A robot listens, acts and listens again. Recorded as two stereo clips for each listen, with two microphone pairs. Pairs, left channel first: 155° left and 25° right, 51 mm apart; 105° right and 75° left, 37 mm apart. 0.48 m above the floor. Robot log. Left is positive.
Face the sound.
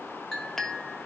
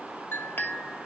note: The clink: 125° right.
cmd yaw -125
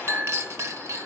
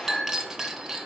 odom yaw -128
end: Found it: a clink, straight ahead.